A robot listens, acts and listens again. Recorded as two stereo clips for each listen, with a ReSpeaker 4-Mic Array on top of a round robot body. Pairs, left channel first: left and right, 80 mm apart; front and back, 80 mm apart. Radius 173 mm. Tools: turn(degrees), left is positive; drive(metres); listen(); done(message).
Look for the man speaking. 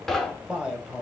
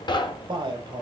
turn(degrees=-170)
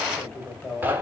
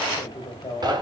turn(degrees=25)
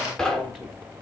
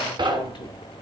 listen()
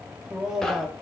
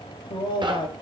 done("Facing the man speaking.")